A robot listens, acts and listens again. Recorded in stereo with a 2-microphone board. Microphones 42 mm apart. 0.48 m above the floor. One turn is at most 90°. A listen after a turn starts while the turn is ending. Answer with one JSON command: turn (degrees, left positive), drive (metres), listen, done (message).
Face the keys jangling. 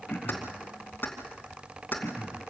{"turn": 45}
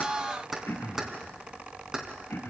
{"turn": -20}
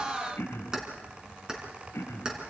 {"turn": -20}
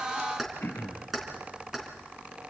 {"done": "Facing the keys jangling, 2 to 4 m away."}